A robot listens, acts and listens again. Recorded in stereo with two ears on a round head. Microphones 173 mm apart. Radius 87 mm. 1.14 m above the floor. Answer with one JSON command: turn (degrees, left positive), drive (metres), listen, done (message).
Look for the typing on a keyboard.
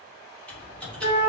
{"turn": 30}
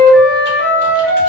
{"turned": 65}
{"listen": true}
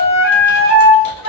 {"listen": true}
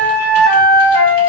{"done": "I heard typing on a keyboard, but can't make it out now. It was about 60° right or 110° left."}